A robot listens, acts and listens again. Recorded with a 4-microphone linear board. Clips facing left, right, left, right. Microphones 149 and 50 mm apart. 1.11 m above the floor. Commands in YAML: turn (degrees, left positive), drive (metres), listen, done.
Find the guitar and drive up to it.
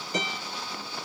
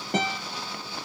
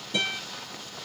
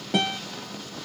turn: -70
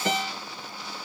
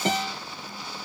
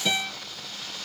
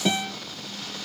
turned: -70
turn: -30
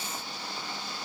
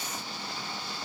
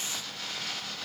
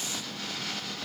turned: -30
listen: true
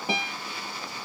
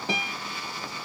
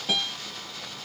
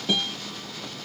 turn: 10
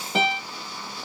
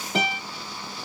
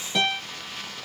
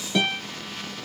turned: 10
drive: 1.0
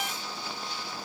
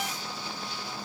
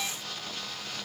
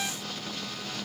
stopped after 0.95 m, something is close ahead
listen: true
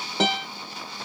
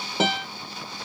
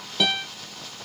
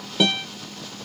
done: "Arrived at the guitar, straight ahead."